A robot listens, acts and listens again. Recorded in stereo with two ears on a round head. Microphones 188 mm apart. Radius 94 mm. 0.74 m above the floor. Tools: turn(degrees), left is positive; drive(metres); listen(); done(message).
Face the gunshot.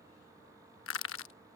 listen()
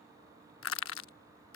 listen()
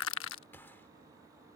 turn(degrees=30)
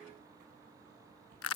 listen()
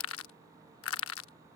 done("I heard a gunshot, but can't make it out now. It was about 20° right or 140° left.")